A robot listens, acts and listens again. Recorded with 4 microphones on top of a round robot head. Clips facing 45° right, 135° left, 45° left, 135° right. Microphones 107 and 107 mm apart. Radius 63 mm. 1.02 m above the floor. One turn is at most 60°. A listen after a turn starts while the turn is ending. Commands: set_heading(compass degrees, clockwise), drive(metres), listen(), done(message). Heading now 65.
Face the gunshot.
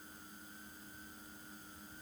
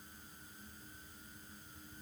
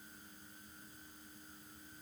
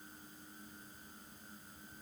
listen()
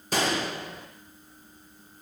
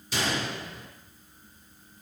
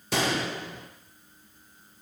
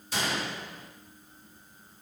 set_heading(55)
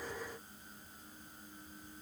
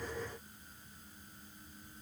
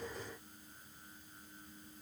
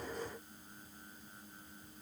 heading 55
done("Facing where the gunshot came from. I can't hear it now.")